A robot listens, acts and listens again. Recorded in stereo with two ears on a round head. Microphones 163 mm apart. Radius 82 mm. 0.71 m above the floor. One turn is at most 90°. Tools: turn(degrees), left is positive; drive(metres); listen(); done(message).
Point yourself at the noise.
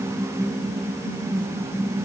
listen()
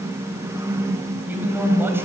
turn(degrees=-30)
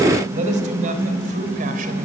turn(degrees=-90)
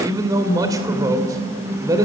turn(degrees=-20)
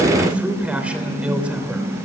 turn(degrees=-10)
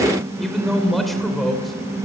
done("Found it: a man speaking, straight ahead.")